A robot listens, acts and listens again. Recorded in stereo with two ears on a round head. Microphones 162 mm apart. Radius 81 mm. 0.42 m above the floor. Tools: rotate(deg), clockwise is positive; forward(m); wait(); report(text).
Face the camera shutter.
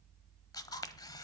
rotate(-20)
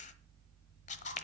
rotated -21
rotate(-135)
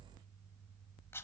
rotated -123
rotate(-15)
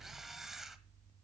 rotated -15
report("Found it: a camera shutter, straight ahead, 1 to 2 m away.")